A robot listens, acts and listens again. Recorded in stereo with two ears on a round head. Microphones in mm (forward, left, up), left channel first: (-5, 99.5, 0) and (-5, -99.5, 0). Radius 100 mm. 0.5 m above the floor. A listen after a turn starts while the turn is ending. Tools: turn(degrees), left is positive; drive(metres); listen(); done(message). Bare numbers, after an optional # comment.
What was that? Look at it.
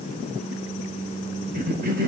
# The cough: about 45° right or 135° right.
turn(-45)
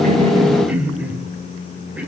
# So it is at 10° right.
turn(-10)
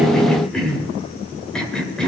done("Found it: a cough, straight ahead, 2 to 4 m away.")